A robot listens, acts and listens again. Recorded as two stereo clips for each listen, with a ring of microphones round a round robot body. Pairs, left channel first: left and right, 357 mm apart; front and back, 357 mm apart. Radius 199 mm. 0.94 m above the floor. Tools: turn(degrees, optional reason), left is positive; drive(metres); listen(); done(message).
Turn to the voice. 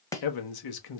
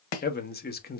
turn(degrees=65, reason="The man speaking: 65° left.")
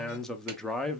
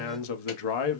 done("Facing the man speaking, 1 to 2 m away.")